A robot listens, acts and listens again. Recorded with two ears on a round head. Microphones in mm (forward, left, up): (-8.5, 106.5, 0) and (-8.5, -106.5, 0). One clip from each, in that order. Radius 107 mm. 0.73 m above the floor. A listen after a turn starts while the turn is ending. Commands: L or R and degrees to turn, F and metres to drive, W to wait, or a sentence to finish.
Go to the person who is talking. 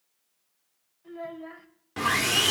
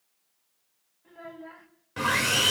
L70
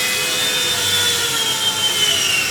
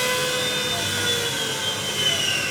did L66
W
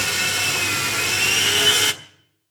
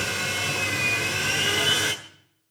W
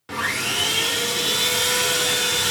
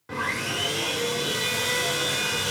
I heard a child speaking, but can't make it out now. It was about 5° left or 45° left. I did not reach it.